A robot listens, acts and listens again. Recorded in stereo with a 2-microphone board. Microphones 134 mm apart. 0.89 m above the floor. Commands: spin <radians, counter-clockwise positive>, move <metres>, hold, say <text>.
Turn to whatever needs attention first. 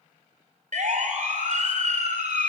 spin -1.22
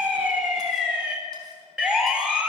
say Facing the siren, over 4 m away.